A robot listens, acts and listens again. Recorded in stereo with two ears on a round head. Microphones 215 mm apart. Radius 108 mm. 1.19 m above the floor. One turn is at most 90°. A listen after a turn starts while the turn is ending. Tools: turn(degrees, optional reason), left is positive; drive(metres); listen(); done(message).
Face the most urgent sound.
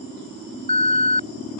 turn(degrees=25, reason="The alarm: about 25° left or 155° left.")
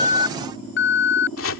turn(degrees=90, reason="So it is at 125° left.")
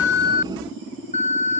turn(degrees=30, reason="The alarm is now 30° left.")
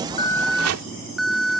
done("Facing the alarm.")